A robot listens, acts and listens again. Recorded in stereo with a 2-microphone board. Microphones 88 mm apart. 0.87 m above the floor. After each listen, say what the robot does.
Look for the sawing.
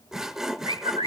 Turn 30° right.
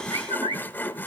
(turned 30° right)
Turn 25° left.
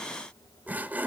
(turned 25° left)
Turn 20° right.
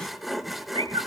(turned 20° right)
Facing the sawing.